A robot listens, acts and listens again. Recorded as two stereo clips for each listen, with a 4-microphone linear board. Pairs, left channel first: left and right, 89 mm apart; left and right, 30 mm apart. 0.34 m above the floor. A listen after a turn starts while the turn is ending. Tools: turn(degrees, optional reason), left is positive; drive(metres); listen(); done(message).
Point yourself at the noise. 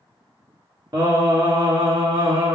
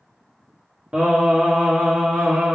turn(degrees=-65, reason="The singing: about 65° right or 115° right.")
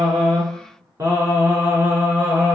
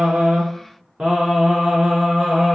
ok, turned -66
turn(degrees=-20, reason="So it is at 20° right.")
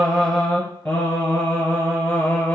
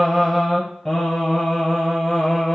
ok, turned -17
turn(degrees=15, reason="The singing is now 15° left.")
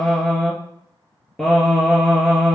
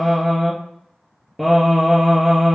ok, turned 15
done("Found it: singing, straight ahead.")